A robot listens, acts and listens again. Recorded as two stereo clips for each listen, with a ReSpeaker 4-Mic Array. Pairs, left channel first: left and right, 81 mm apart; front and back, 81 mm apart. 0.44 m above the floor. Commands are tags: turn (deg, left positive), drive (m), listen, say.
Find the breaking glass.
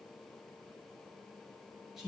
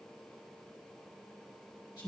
<listen/>
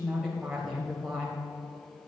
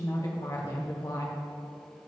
<listen/>
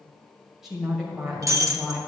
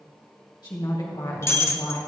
<turn deg="-50"/>
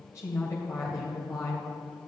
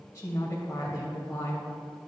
<say>I heard breaking glass from this way, but can't make it out now.</say>